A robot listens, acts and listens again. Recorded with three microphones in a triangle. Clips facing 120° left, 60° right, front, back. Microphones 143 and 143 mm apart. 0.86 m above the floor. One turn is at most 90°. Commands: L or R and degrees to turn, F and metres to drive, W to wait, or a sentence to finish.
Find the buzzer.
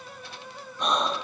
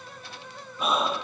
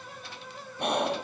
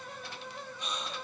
W
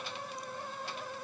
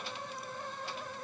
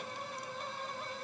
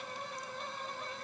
W
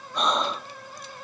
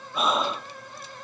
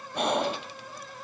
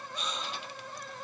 I can't make out a buzzer, only breathing.